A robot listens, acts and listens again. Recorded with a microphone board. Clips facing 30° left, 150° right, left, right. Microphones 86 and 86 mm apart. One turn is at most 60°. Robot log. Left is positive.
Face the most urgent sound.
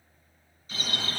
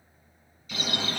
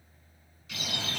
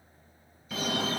note: The fire alarm: 80° right.
cmd yaw -60
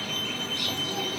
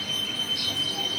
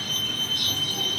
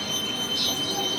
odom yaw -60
note: The fire alarm is now 35° right.
cmd yaw -35
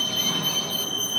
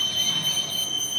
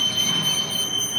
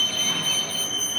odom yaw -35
end: Found it: a fire alarm, straight ahead, 2 to 4 m away.